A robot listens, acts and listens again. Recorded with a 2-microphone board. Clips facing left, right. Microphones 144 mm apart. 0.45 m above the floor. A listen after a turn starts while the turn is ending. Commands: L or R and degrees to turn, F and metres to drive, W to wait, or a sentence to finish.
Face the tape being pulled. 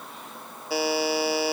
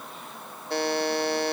W
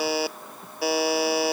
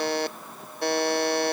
W
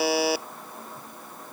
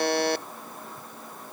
I can't make out tape being pulled, only a buzzer.